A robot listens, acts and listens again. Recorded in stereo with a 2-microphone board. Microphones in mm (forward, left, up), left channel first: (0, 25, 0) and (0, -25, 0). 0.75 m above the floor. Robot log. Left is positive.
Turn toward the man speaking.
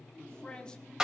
note: The man speaking: about 15° left or 165° left.
cmd yaw +15
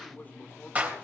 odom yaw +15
note: The man speaking: about 30° left or 150° left.
cmd yaw +30
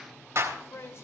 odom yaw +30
note: So it is at 125° left.
cmd yaw +125
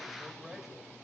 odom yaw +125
end: Found it: a man speaking, straight ahead.